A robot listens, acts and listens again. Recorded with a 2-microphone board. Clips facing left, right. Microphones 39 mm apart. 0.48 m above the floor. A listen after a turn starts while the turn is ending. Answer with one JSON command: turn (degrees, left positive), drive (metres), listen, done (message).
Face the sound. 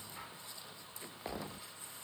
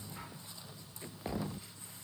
{"listen": true}
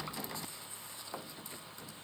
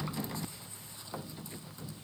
{"listen": true}
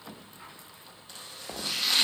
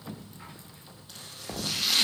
{"turn": -30}
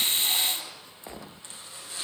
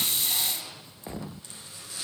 {"turn": 25}
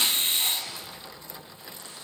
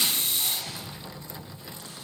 {"listen": true}
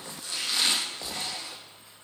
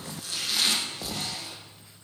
{"turn": -20}
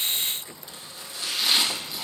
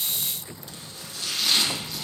{"done": "Found it: chopping, straight ahead."}